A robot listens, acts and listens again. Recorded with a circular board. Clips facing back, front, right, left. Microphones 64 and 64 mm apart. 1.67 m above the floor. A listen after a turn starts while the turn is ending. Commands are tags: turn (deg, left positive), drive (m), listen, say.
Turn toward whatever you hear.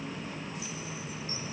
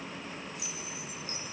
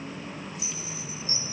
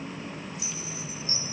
<turn deg="-25"/>
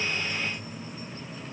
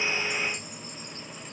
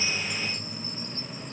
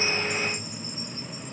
<listen/>
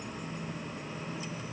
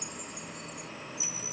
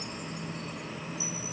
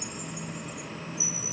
<turn deg="15"/>
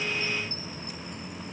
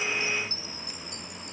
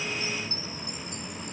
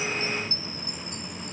<say>Facing the chime.</say>